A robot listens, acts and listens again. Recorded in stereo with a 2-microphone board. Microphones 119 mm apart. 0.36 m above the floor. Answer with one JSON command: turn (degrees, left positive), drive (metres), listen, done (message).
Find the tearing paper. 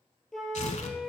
{"turn": 75}
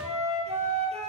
{"listen": true}
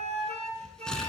{"done": "Facing the tearing paper, under 1 m away."}